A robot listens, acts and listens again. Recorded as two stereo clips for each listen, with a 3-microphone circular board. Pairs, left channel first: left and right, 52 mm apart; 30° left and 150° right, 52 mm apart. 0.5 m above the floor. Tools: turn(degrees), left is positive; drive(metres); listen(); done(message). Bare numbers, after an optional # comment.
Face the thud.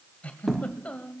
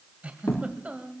done("Facing the thud.")